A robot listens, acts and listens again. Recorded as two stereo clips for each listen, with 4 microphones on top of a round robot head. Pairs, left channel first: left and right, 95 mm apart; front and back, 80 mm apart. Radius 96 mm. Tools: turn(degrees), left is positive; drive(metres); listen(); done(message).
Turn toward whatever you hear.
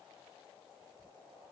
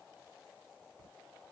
listen()
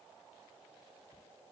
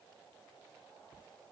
listen()
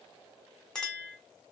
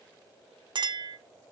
turn(degrees=175)
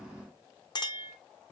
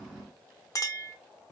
turn(degrees=50)
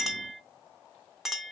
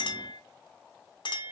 done("Facing the clink, under 1 m away.")